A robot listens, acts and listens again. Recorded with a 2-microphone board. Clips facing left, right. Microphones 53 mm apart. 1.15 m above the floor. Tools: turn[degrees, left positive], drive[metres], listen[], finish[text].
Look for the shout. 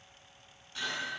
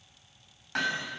Action: listen[]
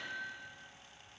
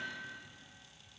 Action: listen[]
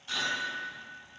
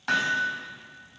Action: finish[I can't make out a shout, only hammering.]